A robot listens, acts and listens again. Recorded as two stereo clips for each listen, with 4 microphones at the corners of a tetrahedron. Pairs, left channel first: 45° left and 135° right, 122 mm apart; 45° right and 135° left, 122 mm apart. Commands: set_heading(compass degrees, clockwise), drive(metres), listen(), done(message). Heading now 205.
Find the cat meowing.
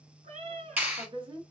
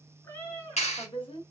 set_heading(315)
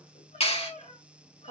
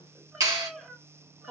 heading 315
set_heading(265)
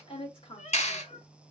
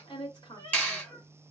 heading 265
set_heading(245)
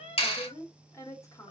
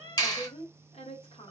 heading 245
set_heading(235)
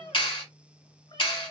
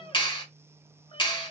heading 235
done("Facing the cat meowing, 2 to 4 m away.")